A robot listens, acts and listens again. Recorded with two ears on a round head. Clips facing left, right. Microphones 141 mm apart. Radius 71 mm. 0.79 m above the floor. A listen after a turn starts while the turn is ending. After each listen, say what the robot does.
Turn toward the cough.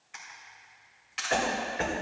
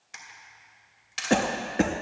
Turn 55° right.
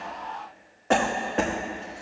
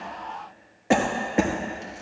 Turn 15° right.
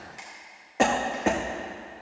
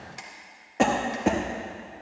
Facing the cough.